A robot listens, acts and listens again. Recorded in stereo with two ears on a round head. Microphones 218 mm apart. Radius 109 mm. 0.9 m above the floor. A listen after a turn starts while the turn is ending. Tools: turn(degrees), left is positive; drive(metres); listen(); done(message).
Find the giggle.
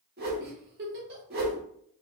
turn(degrees=-45)
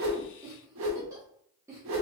turn(degrees=-15)
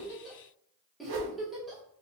done("Facing the giggle.")